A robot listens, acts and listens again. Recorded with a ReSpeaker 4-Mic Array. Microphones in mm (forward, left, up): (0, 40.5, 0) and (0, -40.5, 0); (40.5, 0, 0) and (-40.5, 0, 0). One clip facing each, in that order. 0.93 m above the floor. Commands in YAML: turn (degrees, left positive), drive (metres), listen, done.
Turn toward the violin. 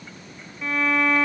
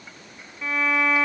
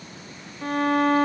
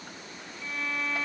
done: "Facing the violin."